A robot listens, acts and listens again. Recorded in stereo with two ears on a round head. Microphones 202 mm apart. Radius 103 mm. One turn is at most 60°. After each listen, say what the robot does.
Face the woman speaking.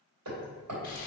Keep listening.
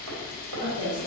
Turn 35° right.
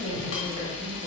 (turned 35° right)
Turn 25° right.
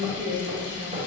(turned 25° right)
Turn 40° right.
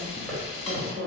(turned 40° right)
Turn 30° right.
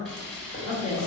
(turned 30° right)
Turn 10° right.
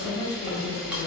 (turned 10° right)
Facing the woman speaking, 2 to 4 m away.